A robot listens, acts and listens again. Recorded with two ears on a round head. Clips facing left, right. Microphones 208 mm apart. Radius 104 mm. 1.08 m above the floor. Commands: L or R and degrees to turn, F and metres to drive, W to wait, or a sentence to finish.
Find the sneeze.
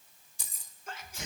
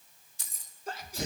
R30
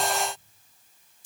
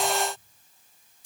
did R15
W
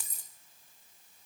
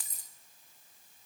I heard a sneeze, but can't make it out now. It was about 15° right or 135° right.